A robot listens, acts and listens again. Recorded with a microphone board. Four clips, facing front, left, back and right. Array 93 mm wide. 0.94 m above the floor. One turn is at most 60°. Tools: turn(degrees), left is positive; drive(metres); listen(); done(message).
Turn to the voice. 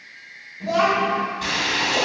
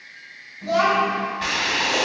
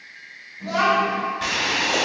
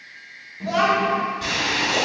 turn(degrees=-60)
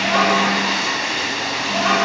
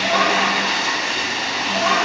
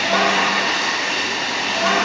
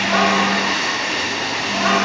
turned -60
turn(degrees=-40)
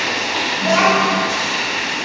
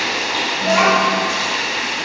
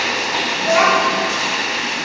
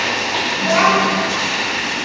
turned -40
done("Facing the child speaking, 1 to 2 m away.")